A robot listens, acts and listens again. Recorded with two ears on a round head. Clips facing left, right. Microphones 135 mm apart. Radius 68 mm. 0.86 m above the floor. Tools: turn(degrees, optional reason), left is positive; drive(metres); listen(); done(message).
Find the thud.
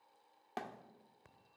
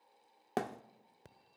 turn(degrees=-60, reason="The thud: about 60° right or 120° right.")
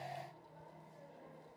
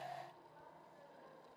listen()
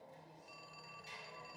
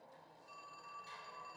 done("I heard a thud, but can't make it out now. It was about straight ahead or 60° right.")